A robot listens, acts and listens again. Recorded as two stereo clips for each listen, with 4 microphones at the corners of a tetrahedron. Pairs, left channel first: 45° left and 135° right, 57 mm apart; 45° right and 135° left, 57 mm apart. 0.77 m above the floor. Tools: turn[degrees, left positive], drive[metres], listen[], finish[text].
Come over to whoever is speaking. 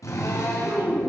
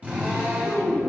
Thought: The child speaking: 120° right.
Action: turn[-120]
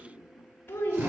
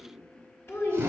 Action: drive[1.0]
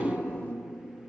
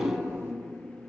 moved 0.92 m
Thought: The child speaking is now 10° right.
Action: turn[-10]
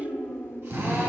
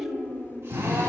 Action: drive[1.0]
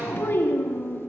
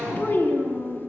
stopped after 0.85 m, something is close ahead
Action: finish[Arrived at the child speaking, straight ahead.]